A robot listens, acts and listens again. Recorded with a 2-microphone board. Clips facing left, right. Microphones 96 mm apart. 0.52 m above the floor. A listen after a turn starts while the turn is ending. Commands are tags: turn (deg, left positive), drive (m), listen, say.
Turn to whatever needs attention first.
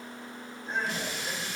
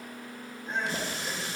<turn deg="-30"/>
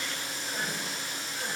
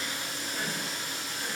<listen/>
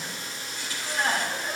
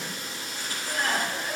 <turn deg="30"/>
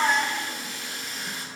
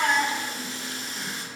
<turn deg="-10"/>
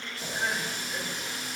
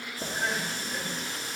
<say>Facing the crying.</say>